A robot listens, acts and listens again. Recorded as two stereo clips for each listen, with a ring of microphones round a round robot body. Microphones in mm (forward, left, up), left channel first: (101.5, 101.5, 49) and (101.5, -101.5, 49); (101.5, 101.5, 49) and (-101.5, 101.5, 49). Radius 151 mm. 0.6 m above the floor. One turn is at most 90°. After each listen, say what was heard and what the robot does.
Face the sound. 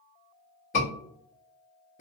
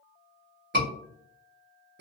The scream: 150° left. Turn 90° left.
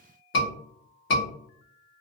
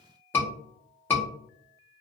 The scream is now 80° left. Turn 80° left.
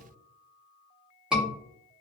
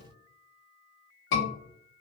Found it: a scream, straight ahead.